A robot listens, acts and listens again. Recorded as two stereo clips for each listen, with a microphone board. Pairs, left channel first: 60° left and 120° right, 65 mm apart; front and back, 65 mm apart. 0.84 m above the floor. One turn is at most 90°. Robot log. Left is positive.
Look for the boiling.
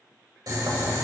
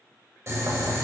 note: The boiling: 140° right.
cmd yaw -90
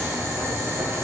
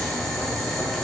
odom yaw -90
note: The boiling is now 85° right.
cmd yaw -85
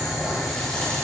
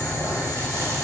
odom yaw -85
note: The boiling is now 30° right.
cmd yaw -30
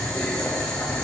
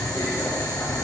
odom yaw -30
note: The boiling is now 10° right.
cmd yaw -10
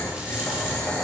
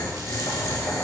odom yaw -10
end: Found it: boiling, straight ahead.